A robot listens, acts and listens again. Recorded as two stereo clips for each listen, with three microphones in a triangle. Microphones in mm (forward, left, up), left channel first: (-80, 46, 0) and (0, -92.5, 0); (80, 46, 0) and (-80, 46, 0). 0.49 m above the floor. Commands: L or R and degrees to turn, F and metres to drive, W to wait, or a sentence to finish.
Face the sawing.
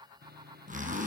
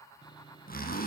R60
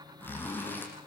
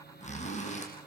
Facing the sawing, 1 to 2 m away.